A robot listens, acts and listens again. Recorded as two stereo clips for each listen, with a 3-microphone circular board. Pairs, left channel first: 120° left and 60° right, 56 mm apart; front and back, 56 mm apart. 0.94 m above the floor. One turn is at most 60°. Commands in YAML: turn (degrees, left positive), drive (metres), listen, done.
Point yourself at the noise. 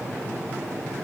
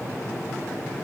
listen: true
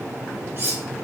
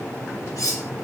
turn: -10
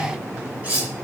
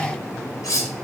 done: "Facing the cutlery clinking, 1 to 2 m away."